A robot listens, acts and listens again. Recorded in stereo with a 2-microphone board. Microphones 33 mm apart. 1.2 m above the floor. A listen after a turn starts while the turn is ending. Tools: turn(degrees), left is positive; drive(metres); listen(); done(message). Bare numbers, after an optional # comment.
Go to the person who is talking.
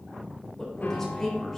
turn(30)
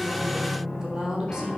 # So it is at 20° right.
turn(-20)
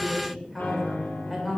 drive(1.0)
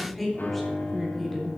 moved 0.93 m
drive(1.0)
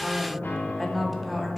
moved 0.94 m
drive(1.0)
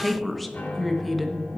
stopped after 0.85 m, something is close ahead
done("Arrived at the woman speaking, straight ahead.")